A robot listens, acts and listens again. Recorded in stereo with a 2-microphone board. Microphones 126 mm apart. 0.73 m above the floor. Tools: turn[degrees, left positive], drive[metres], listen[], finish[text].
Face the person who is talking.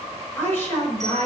Thought: The woman speaking: about 20° left or 160° left.
Action: turn[20]
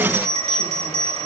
Action: listen[]
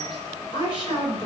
Thought: So it is at 140° left.
Action: turn[140]
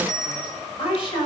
Thought: The woman speaking is now 45° left.
Action: turn[45]
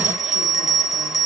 Action: listen[]
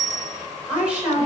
Thought: The woman speaking is now 10° right.
Action: turn[-10]
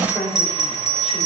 Action: finish[Facing the woman speaking, over 4 m away.]